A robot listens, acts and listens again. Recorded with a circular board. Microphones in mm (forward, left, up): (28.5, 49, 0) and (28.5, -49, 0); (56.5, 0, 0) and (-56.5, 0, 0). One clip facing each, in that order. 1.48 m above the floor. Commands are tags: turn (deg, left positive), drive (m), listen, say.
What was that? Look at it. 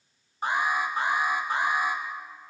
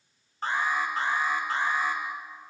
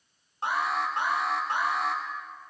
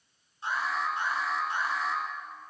<turn deg="15"/>
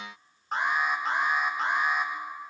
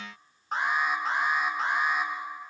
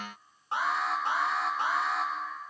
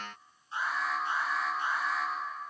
<say>Facing the alarm.</say>